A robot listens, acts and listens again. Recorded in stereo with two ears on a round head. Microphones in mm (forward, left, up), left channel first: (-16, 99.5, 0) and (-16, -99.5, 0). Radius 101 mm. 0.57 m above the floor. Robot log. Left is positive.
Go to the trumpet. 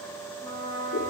note: The trumpet: about 20° left or 160° left.
cmd yaw +20
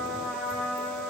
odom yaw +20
cmd fwd 1.0
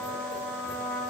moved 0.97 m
note: The trumpet is now 10° left.
cmd yaw +10
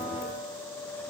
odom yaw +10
cmd idle
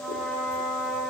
cmd fwd 1.0
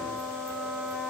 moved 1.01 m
cmd fwd 1.0
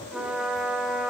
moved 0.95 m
cmd fwd 1.0
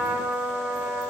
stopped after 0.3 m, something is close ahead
note: The trumpet is now 10° right.
cmd yaw -10
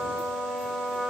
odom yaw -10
end: I am next to the trumpet.